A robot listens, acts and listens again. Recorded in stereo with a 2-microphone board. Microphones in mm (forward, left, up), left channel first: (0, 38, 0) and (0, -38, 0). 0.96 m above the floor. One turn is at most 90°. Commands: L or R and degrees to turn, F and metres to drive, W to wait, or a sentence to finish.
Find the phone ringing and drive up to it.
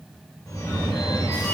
L45
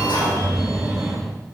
F1.0
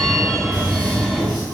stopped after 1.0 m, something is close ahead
I am next to the phone ringing.